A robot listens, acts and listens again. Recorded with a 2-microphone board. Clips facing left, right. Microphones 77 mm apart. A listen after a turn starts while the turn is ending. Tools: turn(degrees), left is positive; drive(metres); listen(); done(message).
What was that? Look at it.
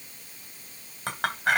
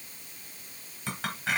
turn(degrees=55)
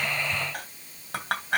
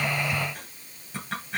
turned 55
turn(degrees=70)
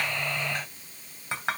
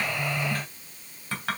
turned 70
turn(degrees=20)
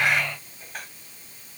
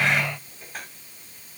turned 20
done("Facing the clink, 2 to 4 m away.")